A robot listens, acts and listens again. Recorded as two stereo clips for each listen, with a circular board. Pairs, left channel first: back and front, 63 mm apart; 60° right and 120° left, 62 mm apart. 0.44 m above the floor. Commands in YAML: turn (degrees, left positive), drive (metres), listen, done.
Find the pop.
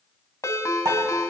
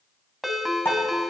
turn: -10
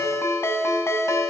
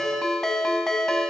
done: "I heard a pop from this way, but can't make it out now."